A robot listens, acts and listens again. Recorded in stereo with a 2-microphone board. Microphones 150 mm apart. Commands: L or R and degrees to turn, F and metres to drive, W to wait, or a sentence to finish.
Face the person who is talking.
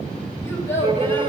L15
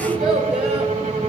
R30
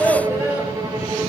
L20
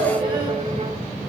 R10
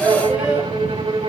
Found it: a child speaking, straight ahead, over 4 m away.